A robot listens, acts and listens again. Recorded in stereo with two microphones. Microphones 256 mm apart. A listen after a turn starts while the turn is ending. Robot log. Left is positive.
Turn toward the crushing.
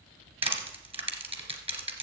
note: The crushing: about 20° right or 160° right.
cmd yaw -20
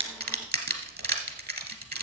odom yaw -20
note: So it is at 140° right.
cmd yaw -140
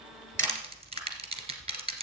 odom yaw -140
note: The crushing is now 25° right.
cmd yaw -25
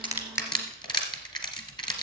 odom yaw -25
note: The crushing is now 15° left.
cmd yaw +15
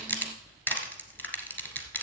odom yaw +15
end: Found it: crushing, straight ahead, 1 to 2 m away.